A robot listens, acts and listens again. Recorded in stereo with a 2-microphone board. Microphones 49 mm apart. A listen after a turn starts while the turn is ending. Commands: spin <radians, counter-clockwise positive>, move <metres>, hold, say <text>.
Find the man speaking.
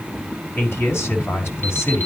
spin 1.05
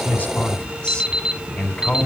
spin 0.35
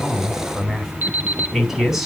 say Facing the man speaking.